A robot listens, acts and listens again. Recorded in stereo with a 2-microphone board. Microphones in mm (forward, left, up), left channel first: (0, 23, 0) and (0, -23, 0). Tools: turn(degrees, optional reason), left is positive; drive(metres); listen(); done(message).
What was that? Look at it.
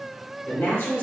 turn(degrees=70, reason="The woman speaking: about 70° left or 110° left.")
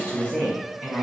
turn(degrees=30, reason="So it is at 30° left.")
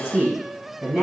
turn(degrees=-15, reason="The woman speaking is now 15° right.")
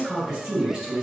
turn(degrees=-10, reason="The woman speaking is now 10° right.")
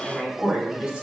done("Found it: a woman speaking, straight ahead.")